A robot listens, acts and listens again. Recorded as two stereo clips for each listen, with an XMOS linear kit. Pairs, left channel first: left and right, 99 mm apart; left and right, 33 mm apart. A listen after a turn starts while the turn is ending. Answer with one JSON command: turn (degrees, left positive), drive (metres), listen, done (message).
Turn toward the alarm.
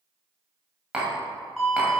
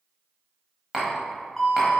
{"turn": -30}
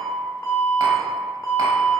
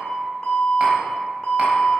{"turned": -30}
{"turn": 25}
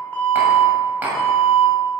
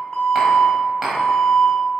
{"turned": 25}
{"done": "Found it: an alarm, straight ahead, 1 to 2 m away."}